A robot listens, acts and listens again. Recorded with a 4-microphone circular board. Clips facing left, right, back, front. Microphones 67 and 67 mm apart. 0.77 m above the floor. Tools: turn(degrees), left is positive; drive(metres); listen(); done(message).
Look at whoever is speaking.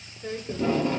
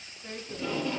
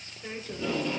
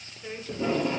turn(degrees=100)
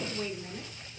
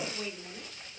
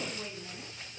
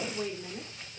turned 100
turn(degrees=15)
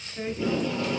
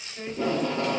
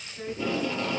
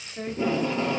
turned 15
done("Facing the woman speaking, 1 to 2 m away.")